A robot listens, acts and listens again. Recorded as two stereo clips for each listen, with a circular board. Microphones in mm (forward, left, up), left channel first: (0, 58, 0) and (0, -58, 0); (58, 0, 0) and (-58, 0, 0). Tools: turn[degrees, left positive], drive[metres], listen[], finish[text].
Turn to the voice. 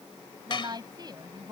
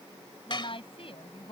Thought: The woman speaking: 35° right.
Action: turn[-35]
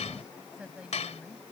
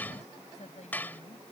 Thought: The woman speaking is now 10° right.
Action: turn[-10]
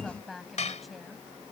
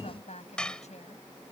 Action: finish[Found it: a woman speaking, straight ahead.]